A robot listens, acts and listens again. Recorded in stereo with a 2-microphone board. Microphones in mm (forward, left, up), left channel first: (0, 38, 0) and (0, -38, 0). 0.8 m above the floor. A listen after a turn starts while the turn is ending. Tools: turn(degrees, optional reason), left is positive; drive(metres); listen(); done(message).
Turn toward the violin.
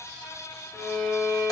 turn(degrees=20, reason="The violin: about 20° left or 160° left.")
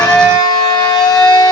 listen()
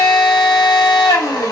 listen()
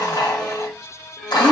done("Found it: a violin, straight ahead, 1 to 2 m away.")